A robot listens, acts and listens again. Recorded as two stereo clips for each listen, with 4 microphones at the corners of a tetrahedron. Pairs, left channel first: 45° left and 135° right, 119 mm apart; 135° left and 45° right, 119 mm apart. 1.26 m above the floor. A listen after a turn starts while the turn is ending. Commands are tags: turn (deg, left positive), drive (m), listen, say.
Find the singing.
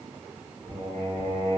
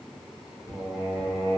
<turn deg="-160"/>
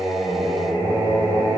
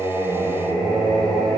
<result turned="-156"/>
<say>Facing the singing, 1 to 2 m away.</say>